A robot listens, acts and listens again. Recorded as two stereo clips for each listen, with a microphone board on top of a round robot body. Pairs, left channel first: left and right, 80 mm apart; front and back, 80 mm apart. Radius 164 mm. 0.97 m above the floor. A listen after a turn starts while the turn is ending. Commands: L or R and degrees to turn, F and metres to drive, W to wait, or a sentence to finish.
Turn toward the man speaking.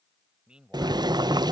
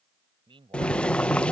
R170
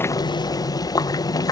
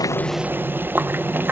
W
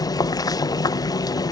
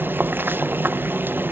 W
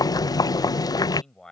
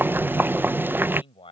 Facing the man speaking.